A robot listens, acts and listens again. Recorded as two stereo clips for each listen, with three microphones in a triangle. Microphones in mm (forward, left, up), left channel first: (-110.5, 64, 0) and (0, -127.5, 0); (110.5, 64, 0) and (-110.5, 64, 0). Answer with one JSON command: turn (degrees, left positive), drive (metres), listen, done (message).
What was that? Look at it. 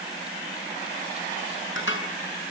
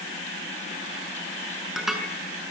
{"turn": 90}
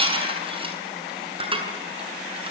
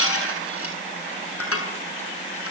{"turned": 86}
{"done": "Found it: dishes clattering, straight ahead, over 4 m away."}